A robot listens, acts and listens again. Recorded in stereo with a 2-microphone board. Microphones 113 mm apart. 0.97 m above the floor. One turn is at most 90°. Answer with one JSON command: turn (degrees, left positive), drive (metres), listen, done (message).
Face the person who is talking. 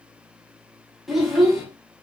{"turn": 30}
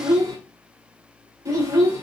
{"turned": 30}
{"turn": -30}
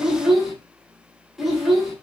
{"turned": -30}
{"done": "Found it: a child speaking, straight ahead."}